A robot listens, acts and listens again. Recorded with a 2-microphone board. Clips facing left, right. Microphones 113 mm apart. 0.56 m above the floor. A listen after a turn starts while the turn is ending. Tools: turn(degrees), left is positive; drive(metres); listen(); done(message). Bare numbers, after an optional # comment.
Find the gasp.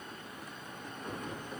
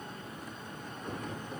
listen()
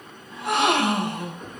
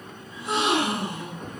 # The gasp: about 70° left or 110° left.
turn(70)
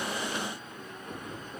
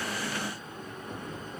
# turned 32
listen()
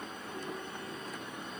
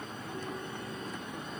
done("I heard a gasp, but can't make it out now. It was about 35° left or 80° left.")